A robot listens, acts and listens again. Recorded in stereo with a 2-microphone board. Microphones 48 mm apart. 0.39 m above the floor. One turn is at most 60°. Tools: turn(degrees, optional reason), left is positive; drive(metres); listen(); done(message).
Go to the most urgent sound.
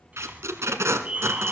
turn(degrees=-30, reason="The fire alarm: about 30° right or 150° right.")
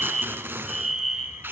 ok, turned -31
drive(metres=1.0)
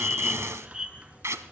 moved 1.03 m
turn(degrees=-15, reason="The fire alarm is now 15° right.")
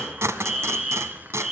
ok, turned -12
drive(metres=1.0)
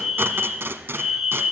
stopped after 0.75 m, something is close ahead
done("Arrived at the fire alarm, straight ahead.")